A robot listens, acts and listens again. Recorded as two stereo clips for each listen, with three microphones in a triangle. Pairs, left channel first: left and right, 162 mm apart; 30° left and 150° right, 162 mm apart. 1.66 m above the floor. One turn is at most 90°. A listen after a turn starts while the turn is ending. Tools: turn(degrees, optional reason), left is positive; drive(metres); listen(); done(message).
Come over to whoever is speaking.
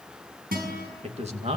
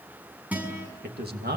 turn(degrees=-90, reason="The man speaking: 140° right.")
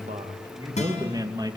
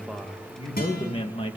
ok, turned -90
turn(degrees=-25, reason="The man speaking is now 25° right.")
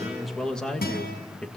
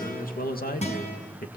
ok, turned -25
drive(metres=1.0)
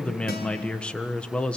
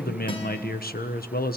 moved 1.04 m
drive(metres=1.0)
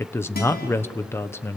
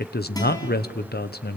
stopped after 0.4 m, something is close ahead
turn(degrees=15, reason="The man speaking is now 15° left.")
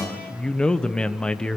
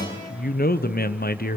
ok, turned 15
done("Arrived at the man speaking, straight ahead.")